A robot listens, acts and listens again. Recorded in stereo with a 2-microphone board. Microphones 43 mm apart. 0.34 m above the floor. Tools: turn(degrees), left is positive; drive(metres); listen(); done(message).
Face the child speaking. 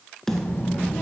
turn(degrees=45)
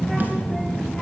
turn(degrees=15)
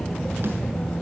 turn(degrees=15)
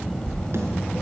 turn(degrees=20)
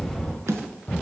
turn(degrees=25)
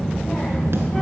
turn(degrees=20)
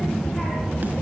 done("Found it: a child speaking, straight ahead, 1 to 2 m away.")